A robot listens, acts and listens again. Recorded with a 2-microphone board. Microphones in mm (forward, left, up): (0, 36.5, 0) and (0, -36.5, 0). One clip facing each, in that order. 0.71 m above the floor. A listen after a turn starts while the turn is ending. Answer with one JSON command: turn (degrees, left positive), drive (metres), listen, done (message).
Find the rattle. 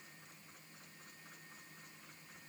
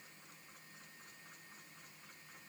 {"listen": true}
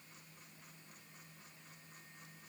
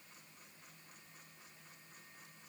{"listen": true}
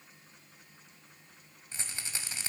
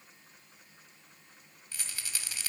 {"turn": 25}
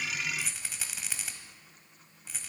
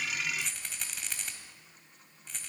{"done": "Facing the rattle."}